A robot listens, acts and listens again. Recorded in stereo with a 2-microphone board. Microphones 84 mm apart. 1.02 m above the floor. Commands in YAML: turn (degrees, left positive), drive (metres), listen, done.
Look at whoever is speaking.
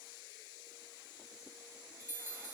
listen: true
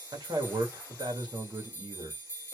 turn: -75
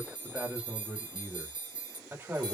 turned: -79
turn: -30
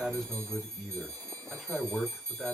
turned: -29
done: "Facing the man speaking, 2 to 4 m away."